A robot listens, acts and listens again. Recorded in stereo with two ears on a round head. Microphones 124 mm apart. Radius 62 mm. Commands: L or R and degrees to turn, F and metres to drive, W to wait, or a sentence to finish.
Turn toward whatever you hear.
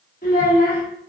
L65
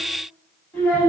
L15
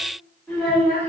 Found it: a child speaking, straight ahead, 2 to 4 m away.